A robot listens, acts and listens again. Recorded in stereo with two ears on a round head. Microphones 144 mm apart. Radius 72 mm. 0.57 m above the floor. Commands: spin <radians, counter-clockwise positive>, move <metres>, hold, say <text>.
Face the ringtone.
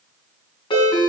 spin 0.52
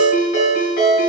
spin 2.01
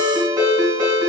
spin -0.44
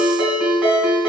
spin -0.17
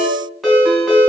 say Facing the ringtone, 2 to 4 m away.